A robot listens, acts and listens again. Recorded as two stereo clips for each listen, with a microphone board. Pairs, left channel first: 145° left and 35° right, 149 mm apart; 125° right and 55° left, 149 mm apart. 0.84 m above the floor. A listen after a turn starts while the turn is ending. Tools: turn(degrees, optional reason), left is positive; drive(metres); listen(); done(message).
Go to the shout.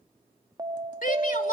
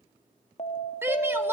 turn(degrees=130, reason="The shout: 130° left.")
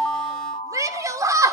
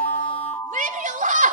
turn(degrees=30, reason="The shout is now 30° left.")
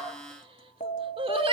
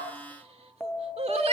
turn(degrees=15, reason="The shout is now 15° left.")
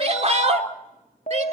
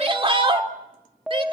drive(metres=1.0)
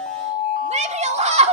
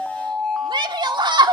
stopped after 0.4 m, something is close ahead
done("Something is in my way. I am facing the shout but have not reached it.")